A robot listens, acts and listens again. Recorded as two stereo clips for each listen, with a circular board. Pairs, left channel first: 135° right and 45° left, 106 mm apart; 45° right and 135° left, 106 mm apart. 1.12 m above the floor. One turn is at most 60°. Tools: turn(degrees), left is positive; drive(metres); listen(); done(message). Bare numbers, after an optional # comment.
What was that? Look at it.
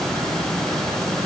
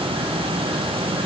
listen()
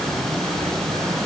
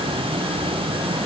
listen()
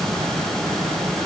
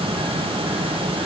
done("I can't make out anything to turn to.")